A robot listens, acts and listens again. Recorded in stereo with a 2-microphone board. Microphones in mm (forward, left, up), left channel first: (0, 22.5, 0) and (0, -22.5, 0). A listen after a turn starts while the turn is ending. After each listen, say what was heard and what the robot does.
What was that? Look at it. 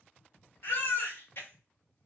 The baby crying: about 60° left or 120° left. Turn 60° left.
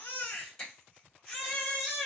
So it is at 10° left. Turn 10° left.
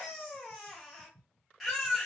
Facing the baby crying.